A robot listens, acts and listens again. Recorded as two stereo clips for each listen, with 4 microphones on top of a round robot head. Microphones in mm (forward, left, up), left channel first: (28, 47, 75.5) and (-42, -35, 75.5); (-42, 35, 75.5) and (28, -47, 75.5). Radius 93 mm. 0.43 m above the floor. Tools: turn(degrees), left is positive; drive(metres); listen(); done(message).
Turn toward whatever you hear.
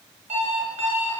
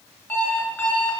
turn(degrees=-150)
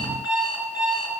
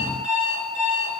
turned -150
turn(degrees=-45)
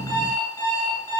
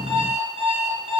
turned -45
turn(degrees=-10)
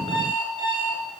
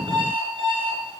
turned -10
done("Found it: an alarm clock, straight ahead, 2 to 4 m away.")